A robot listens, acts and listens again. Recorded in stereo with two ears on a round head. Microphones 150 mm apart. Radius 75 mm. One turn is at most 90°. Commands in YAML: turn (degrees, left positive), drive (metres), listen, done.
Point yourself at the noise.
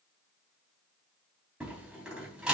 turn: -30
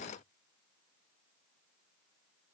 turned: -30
listen: true
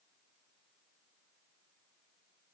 done: "I heard a door slam, but can't make it out now. It was about 25° left or 145° right."